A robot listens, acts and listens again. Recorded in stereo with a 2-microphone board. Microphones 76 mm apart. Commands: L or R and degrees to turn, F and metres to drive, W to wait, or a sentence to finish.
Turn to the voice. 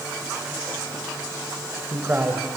R25
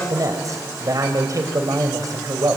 R130
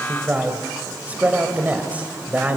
R20
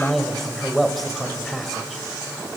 Facing the man speaking, 2 to 4 m away.